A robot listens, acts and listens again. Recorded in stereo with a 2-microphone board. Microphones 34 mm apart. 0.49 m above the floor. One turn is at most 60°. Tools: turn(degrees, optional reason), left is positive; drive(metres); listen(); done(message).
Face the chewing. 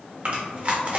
turn(degrees=-45, reason="The chewing: about 45° right or 135° right.")
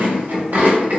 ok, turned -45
turn(degrees=-60, reason="So it is at 80° right.")
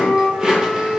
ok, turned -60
turn(degrees=-25, reason="The chewing is now 25° right.")
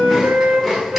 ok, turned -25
done("Found it: chewing, straight ahead.")